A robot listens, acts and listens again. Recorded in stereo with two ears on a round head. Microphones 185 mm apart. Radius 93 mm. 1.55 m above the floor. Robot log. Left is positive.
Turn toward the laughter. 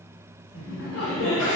note: The laughter: about 65° left or 115° left.
cmd yaw +65
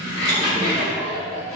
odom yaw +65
note: So it is at 35° left.
cmd yaw +35
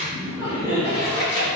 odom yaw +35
note: The laughter is now 35° left.
cmd yaw +35
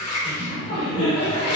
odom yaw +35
note: The laughter is now 25° left.
cmd yaw +25
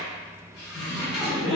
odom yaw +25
end: Found it: laughter, straight ahead, 1 to 2 m away.